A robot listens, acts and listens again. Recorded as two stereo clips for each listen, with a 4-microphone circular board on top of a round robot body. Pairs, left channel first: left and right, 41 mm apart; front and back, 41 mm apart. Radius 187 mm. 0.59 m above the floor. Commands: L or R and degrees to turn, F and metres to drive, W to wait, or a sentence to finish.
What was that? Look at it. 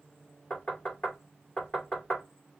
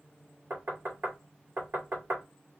L155
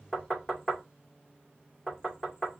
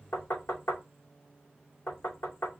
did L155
L15
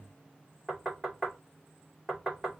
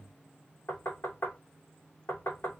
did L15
Found it: knocking, straight ahead.